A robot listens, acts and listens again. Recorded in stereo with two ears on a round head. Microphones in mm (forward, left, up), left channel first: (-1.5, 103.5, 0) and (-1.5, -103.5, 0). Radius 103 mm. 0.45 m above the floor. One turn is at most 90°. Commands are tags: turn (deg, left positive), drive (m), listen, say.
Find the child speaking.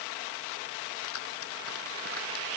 <listen/>
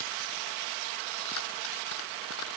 <listen/>
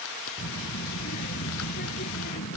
<turn deg="45"/>
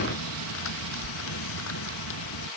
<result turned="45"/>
<turn deg="85"/>
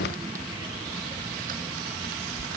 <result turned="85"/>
<turn deg="-15"/>
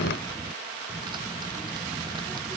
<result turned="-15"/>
<say>Facing the child speaking.</say>